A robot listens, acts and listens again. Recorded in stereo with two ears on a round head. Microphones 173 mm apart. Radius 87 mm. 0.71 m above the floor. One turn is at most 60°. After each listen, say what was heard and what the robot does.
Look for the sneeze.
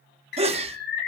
The sneeze: about 35° right or 145° right. Turn 35° right.
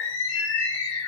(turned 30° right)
Keep listening.
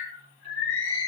I heard a sneeze, but can't make it out now. It was about 5° right or 115° right.